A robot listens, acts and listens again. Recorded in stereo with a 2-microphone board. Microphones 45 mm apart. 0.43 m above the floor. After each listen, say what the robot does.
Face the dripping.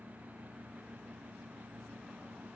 Keep listening.
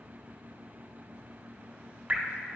Turn 35° right.
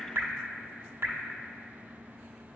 Turn 110° right.
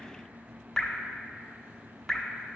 Found it: dripping, straight ahead, under 1 m away.